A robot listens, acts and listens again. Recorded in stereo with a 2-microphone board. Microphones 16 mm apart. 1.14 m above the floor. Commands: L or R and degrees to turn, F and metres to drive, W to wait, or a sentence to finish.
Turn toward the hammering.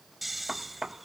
R30
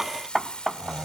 Found it: hammering, straight ahead.